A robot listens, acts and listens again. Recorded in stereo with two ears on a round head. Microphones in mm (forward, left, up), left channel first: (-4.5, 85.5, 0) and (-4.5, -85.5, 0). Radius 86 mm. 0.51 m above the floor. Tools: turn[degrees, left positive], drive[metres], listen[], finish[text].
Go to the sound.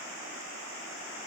Action: listen[]
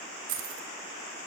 Action: turn[-90]
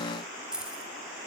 Action: drive[1.0]
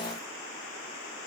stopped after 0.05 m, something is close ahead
Action: listen[]
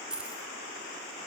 Action: finish[Blocked. The keys jangling is further on, straight ahead.]